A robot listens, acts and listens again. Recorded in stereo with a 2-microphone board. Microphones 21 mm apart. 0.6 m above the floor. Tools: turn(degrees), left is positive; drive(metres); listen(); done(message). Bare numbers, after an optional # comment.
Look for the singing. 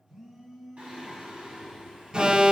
turn(-90)
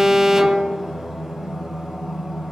# So it is at 35° right.
turn(-35)
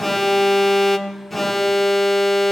listen()
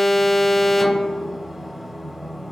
done("Facing the singing.")